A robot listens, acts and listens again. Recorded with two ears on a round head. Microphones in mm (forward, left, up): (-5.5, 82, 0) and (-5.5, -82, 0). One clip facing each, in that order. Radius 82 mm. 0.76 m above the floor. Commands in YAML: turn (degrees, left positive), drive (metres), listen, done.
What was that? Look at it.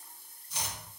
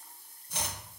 turn: -45
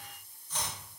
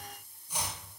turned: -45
turn: -10
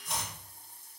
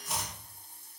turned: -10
done: "Facing the chopping, 1 to 2 m away."